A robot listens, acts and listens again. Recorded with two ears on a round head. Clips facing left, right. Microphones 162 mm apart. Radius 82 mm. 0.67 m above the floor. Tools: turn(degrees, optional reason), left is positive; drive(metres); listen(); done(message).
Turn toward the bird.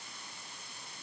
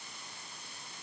listen()
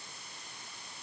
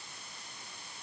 listen()
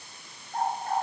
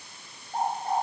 turn(degrees=-30)
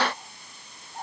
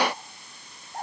turn(degrees=-135, reason="So it is at 135° right.")
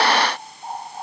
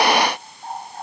done("Found it: a bird, straight ahead, 2 to 4 m away.")